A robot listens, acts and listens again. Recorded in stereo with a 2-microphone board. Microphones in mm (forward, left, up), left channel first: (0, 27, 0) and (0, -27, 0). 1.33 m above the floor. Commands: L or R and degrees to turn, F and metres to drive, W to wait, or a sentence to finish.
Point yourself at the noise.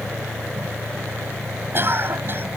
R45
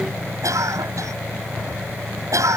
R95
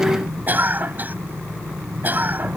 R35
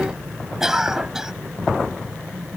R10
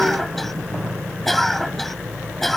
Facing the cough.